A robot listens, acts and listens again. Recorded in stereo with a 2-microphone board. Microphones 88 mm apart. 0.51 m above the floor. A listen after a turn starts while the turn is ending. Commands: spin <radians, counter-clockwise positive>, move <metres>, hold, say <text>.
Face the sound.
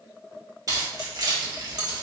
spin -0.96
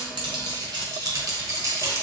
spin -0.61
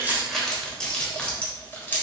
spin 0.44
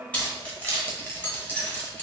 spin 0.35
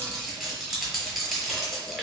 say Facing the keys jangling.